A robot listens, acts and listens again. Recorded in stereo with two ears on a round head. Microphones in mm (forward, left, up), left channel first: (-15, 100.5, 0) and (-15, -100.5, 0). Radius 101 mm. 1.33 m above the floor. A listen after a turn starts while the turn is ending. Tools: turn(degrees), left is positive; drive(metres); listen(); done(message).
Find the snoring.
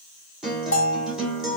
listen()
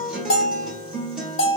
listen()
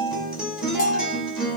done("I can't make out snoring, only a bell and a guitar.")